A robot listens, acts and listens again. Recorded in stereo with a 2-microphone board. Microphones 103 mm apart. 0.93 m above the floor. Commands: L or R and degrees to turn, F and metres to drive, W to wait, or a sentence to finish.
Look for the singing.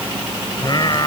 L45
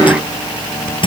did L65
W
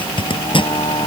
L65
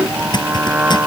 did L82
R15
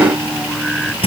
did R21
Found it: singing, straight ahead.